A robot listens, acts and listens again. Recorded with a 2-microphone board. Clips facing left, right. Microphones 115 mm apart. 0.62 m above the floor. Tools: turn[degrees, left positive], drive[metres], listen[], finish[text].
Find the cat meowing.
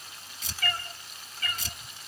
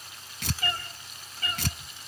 Thought: The cat meowing: about 30° right or 150° right.
Action: turn[-30]
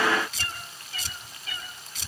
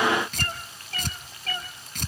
Thought: So it is at 110° right.
Action: turn[-110]
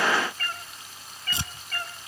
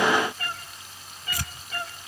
Thought: The cat meowing is now 10° right.
Action: turn[-10]
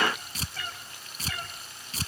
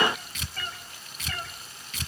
Action: finish[Found it: a cat meowing, straight ahead.]